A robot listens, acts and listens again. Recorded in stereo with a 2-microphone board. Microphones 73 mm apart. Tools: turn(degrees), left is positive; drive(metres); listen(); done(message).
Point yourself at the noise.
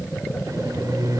turn(degrees=-55)
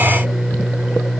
done("Facing the microwave, 2 to 4 m away.")